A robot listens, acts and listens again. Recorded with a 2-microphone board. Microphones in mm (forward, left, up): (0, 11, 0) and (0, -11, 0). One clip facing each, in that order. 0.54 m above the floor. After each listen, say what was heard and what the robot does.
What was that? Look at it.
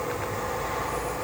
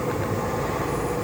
Keep listening.
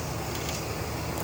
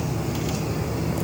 Keep listening.
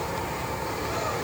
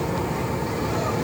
I can't make out anything to turn to.